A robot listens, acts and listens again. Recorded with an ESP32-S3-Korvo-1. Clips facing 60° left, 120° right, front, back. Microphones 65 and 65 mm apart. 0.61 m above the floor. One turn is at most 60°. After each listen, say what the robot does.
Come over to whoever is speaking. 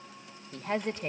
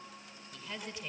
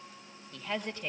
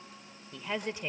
Turn 60° left.
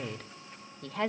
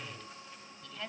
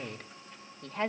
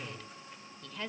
Turn 50° left.
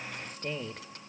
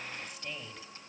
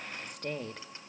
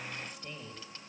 Turn 15° left.
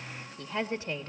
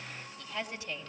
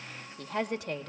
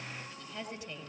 Drive 1.0 m forward.
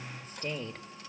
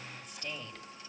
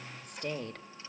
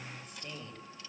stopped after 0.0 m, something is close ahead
Turn 10° left.
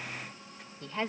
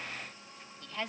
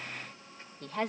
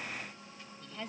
Something is in my way. I am facing the woman speaking but have not reached it.